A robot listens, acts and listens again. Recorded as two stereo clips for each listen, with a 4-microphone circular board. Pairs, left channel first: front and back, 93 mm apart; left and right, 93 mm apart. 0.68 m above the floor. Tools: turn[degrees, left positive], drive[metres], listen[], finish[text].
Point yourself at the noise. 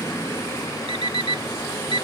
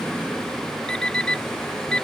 Thought: The alarm clock: 170° left.
Action: turn[170]
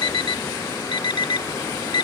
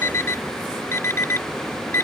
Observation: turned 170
Thought: The alarm clock is now 30° left.
Action: turn[30]
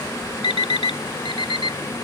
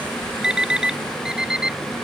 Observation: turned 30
Thought: The alarm clock is now 10° right.
Action: turn[-10]
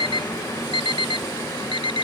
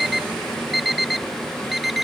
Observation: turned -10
Action: finish[Found it: an alarm clock, straight ahead.]